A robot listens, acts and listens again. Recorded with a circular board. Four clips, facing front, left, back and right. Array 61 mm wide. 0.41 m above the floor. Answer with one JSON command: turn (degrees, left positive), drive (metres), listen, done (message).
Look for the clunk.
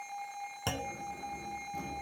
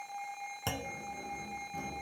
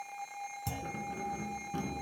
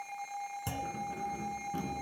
{"turn": 30}
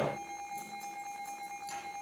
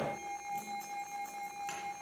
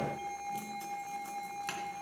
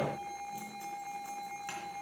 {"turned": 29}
{"done": "Facing where the clunk came from. I can't hear it now."}